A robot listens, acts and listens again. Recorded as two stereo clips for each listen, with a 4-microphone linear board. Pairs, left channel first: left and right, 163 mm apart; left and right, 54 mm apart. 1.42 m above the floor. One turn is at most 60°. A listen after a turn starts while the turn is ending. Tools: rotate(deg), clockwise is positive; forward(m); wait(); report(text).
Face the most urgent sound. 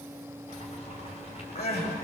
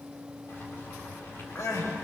rotate(-60)
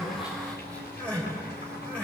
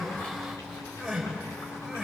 rotate(-10)
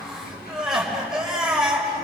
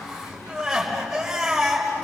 report("Facing the crying.")